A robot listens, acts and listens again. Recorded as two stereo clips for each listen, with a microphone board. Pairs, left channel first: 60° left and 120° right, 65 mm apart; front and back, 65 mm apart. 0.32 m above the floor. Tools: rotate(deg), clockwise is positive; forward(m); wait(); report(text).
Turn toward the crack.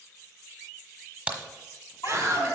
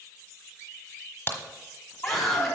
rotate(55)
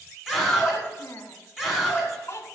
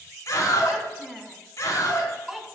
report("I heard a crack from this way, but can't make it out now.")